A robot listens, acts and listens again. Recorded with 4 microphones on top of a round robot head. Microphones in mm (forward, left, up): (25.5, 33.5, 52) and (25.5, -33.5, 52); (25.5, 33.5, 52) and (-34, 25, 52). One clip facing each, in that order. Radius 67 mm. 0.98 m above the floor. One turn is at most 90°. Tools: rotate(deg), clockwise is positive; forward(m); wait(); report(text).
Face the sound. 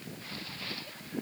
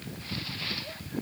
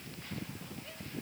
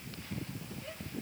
wait()
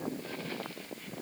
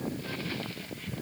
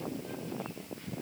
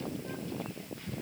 wait()
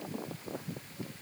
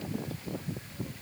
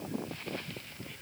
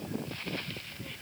report("I can't make out anything to turn to.")